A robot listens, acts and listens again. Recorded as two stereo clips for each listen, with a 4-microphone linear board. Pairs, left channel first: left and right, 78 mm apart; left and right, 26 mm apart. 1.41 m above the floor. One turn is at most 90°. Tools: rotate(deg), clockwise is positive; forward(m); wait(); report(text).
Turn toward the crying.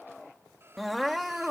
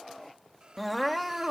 rotate(-30)
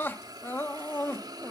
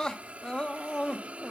rotate(-90)
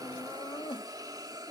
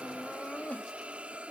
rotate(-90)
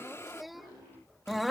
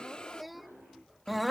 report("Found it: crying, straight ahead.")